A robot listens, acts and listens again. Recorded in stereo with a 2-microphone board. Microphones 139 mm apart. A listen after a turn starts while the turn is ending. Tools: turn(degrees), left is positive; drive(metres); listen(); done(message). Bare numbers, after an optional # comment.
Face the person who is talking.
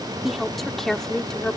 turn(30)
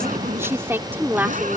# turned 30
# So it is at 15° right.
turn(-15)
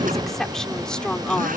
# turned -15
done("Facing the woman speaking.")